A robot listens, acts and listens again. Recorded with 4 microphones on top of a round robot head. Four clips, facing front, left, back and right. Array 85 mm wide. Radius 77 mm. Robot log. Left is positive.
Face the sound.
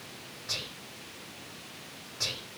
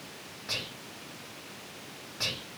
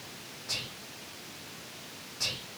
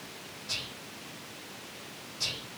note: The whispering: 75° left.
cmd yaw +75
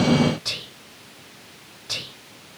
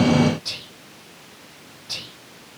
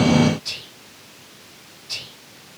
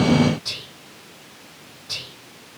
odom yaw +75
note: The whispering is now 10° left.
cmd yaw +10
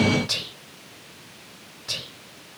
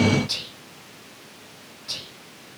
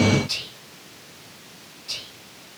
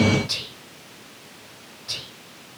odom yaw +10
end: Found it: whispering, straight ahead.